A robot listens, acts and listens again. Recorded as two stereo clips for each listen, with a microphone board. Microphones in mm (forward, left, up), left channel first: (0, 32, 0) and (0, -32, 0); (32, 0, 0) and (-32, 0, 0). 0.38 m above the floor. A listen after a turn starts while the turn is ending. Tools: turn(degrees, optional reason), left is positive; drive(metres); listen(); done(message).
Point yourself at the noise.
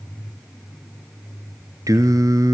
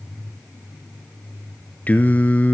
turn(degrees=-65, reason="The singing: 65° right.")
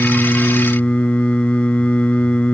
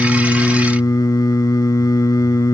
turn(degrees=20, reason="The singing is now 20° left.")
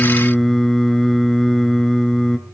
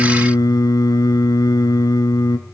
done("Facing the singing, 1 to 2 m away.")